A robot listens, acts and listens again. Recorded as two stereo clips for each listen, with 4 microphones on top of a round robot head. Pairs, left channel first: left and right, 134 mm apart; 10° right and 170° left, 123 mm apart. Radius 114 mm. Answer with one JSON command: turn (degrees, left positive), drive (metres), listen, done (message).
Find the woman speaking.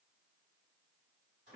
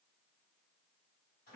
{"listen": true}
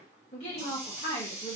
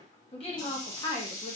{"turn": 50}
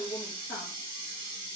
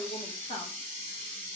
{"turn": 20}
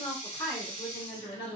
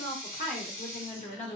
{"turn": 30}
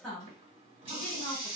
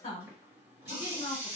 {"done": "Facing the woman speaking."}